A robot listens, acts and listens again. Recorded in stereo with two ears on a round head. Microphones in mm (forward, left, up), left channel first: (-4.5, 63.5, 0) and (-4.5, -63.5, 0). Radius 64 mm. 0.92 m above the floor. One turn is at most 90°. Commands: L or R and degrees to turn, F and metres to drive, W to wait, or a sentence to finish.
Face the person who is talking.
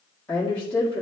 L30
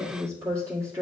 R20
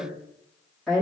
Found it: a woman speaking, straight ahead, 1 to 2 m away.